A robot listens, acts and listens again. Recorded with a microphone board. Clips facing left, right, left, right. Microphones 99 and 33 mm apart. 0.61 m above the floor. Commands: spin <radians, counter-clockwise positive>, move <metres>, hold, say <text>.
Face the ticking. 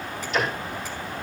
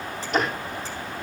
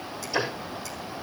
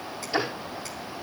spin -0.87
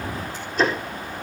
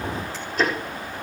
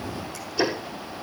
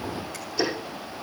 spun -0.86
say Found it: ticking, straight ahead.